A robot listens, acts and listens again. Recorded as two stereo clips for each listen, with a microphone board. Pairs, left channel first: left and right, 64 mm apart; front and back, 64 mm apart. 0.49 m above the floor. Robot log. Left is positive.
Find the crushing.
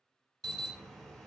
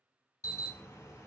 cmd idle
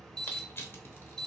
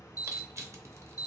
note: The crushing: 140° left.
cmd yaw +140
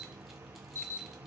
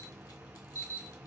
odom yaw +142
cmd idle
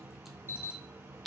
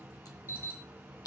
end: Facing the crushing, under 1 m away.